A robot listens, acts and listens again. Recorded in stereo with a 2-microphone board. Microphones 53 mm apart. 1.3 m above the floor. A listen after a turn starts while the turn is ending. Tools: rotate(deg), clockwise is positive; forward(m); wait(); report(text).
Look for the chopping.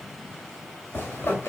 wait()
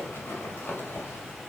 wait()
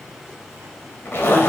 report("I can't make out chopping to turn to.")